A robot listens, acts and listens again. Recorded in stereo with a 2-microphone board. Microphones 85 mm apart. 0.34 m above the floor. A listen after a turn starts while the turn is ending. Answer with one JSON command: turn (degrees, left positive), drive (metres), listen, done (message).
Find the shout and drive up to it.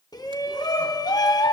{"turn": 50}
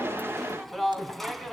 {"drive": 1.0}
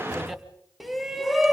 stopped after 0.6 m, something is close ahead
{"done": "Something is in my way. I am facing the shout but have not reached it."}